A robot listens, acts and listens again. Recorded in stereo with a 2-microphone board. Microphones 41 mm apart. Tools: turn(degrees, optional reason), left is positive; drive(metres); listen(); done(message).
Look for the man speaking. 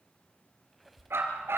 listen()
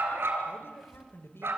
turn(degrees=90)
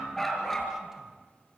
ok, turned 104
turn(degrees=-15, reason="Nothing new. It was at 15° right.")
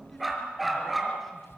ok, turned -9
listen()
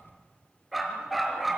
done("I heard a man speaking from this way, but can't make it out now.")